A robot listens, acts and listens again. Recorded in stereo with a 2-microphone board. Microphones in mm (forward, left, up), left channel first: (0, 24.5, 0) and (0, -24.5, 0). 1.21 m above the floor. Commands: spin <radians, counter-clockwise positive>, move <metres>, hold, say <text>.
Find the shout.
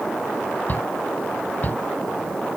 spin 0.61
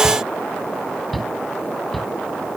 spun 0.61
say Facing the shout.